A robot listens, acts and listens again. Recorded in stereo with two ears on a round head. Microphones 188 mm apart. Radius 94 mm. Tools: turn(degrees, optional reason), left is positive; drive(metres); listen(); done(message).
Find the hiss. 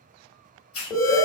turn(degrees=90)
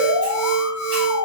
listen()
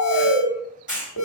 done("Found it: a hiss, straight ahead, 1 to 2 m away.")